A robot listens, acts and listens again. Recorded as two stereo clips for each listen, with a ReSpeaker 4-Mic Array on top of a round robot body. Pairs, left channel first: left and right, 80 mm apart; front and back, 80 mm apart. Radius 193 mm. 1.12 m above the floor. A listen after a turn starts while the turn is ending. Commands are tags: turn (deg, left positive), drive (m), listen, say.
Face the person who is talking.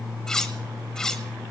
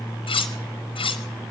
<listen/>
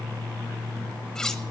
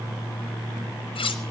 <listen/>
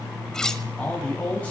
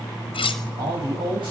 <turn deg="165"/>
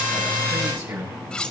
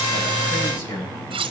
<turn deg="-40"/>
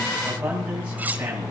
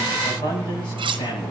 <turn deg="-15"/>
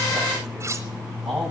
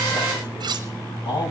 <say>Facing the man speaking, over 4 m away.</say>